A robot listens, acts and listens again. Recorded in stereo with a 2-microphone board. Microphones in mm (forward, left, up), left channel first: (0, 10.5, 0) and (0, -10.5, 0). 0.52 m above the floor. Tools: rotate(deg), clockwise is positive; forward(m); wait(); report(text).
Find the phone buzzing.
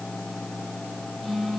rotate(-20)
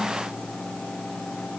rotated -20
wait()
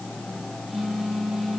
report("Facing the phone buzzing, over 4 m away.")